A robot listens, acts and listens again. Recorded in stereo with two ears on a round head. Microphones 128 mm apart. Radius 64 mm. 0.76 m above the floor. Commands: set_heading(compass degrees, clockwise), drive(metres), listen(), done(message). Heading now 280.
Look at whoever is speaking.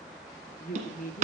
set_heading(220)
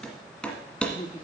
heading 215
set_heading(180)
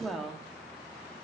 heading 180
done("Facing the woman speaking, 1 to 2 m away.")